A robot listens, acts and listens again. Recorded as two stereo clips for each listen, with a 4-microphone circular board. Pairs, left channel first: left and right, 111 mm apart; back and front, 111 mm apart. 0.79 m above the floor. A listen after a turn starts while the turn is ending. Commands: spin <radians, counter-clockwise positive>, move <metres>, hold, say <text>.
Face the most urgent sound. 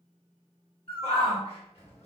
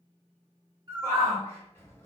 spin 2.01
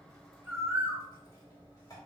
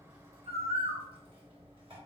hold
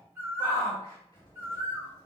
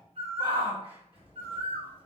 spin 0.61
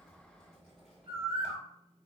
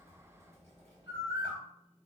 hold
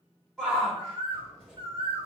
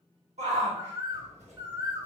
say Found it: a shout, straight ahead.